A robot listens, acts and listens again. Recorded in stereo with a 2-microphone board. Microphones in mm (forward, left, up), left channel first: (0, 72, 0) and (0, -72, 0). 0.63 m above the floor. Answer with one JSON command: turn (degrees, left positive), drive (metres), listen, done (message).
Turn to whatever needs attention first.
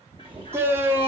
{"turn": -15}
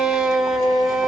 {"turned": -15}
{"done": "Facing the shout."}